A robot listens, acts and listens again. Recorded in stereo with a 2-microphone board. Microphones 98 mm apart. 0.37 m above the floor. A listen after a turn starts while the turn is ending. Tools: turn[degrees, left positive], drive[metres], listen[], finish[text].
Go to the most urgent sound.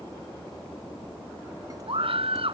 Thought: The scream: about 70° right or 110° right.
Action: turn[-70]
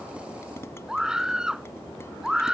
Thought: So it is at 10° right.
Action: turn[-10]
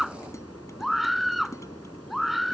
Action: drive[1.0]
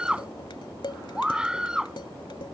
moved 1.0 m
Thought: The scream is now 10° right.
Action: turn[-10]
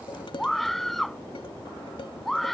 Action: drive[1.0]
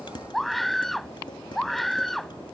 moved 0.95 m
Action: drive[1.0]
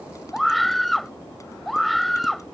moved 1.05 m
Action: drive[1.0]
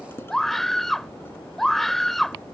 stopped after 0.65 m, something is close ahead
Action: finish[I am next to the scream.]